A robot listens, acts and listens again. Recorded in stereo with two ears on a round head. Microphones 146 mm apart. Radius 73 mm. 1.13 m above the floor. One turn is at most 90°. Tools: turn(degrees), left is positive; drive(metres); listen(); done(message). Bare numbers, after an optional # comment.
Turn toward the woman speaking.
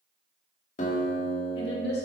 # The woman speaking: about 75° left or 105° left.
turn(75)
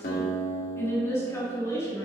# So it is at 20° left.
turn(20)
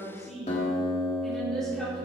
done("Found it: a woman speaking, straight ahead.")